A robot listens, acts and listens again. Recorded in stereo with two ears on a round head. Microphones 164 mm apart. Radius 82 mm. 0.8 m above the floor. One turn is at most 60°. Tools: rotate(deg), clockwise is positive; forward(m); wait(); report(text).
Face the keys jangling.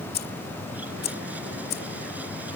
rotate(-55)
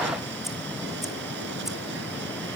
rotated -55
wait()
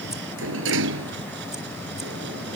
wait()
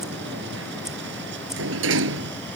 report("I heard keys jangling, but can't make it out now. It was about straight ahead or 70° left.")